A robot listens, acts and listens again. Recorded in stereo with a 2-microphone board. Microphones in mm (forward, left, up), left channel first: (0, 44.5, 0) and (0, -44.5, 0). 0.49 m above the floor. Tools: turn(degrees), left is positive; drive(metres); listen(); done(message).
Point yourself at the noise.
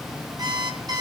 turn(degrees=-45)
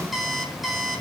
done("Found it: an alarm clock, straight ahead, 2 to 4 m away.")